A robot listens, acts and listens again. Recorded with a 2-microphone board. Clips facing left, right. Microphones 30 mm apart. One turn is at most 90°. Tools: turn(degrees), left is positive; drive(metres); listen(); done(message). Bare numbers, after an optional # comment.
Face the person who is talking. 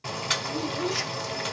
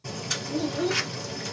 # The child speaking: about 35° right or 145° right.
turn(-35)
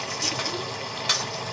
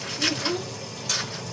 listen()
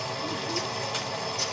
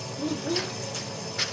listen()
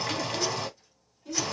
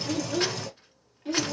# So it is at 105° right.
turn(-90)
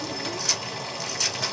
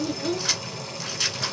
# The child speaking is now 55° right.
turn(-55)
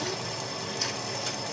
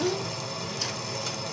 # The child speaking is now 25° right.
turn(-25)
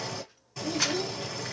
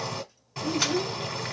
# The child speaking is now 15° left.
turn(15)
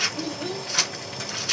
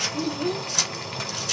done("Found it: a child speaking, straight ahead.")